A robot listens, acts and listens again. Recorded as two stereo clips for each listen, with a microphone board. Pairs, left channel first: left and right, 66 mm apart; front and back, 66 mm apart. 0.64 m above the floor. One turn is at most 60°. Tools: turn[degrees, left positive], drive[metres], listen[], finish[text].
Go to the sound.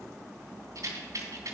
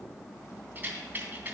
Thought: The rattle: 115° right.
Action: turn[-60]
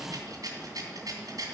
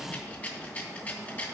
Thought: The rattle is now 65° right.
Action: turn[-60]
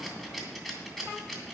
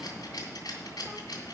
Action: drive[1.0]
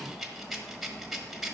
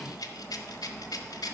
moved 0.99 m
Action: drive[1.0]
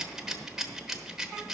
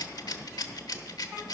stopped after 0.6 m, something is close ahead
Action: finish[I am next to the rattle.]